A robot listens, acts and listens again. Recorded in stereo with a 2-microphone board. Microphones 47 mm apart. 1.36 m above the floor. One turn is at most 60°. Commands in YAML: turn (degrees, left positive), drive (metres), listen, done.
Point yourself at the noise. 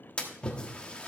turn: 25
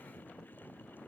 listen: true
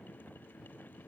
done: "I heard a splash, but can't make it out now. It was about straight ahead or 130° left."